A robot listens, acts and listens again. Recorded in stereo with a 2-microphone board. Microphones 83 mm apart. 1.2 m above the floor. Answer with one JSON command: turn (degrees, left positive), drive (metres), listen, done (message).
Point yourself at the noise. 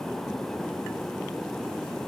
{"listen": true}
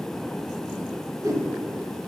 {"turn": -45}
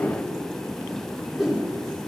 {"done": "Facing the whoosh."}